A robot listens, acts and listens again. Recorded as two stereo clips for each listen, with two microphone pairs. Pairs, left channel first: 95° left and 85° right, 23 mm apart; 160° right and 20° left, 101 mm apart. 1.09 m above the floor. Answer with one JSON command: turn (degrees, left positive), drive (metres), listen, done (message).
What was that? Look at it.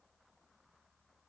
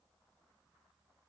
{"listen": true}
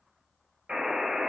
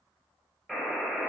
{"turn": -70}
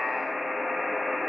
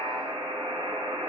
{"done": "Found it: a buzzer, straight ahead, 1 to 2 m away."}